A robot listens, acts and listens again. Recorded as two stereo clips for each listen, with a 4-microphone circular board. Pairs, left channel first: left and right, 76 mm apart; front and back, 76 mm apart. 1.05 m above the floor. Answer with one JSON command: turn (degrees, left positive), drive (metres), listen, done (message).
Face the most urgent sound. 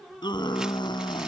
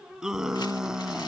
{"turn": 100}
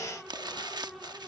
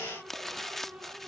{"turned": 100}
{"listen": true}
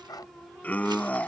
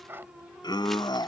{"turn": 20}
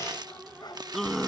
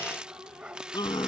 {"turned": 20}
{"done": "Found it: a scream, straight ahead."}